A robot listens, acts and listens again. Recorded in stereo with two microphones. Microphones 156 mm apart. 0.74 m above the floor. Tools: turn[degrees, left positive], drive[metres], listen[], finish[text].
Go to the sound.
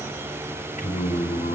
Thought: The singing: about 60° left or 120° left.
Action: turn[60]
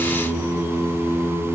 Action: drive[1.0]
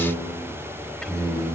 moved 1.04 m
Action: drive[1.0]
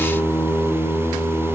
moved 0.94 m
Thought: The singing is now 10° left.
Action: turn[10]
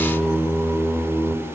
Action: drive[1.0]
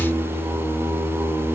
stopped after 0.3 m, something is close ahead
Thought: The singing is now 10° right.
Action: turn[-10]
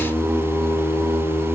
Action: finish[I am next to the singing.]